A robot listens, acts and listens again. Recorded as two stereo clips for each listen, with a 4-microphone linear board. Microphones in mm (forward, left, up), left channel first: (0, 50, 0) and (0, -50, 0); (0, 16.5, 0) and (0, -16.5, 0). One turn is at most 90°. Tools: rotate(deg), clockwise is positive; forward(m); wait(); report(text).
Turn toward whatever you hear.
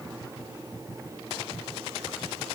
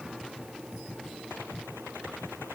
wait()
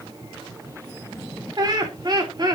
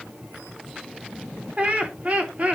rotate(45)
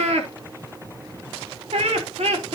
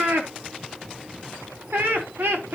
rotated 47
rotate(90)
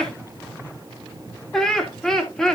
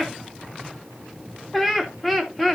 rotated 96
report("Facing the laughter, 2 to 4 m away.")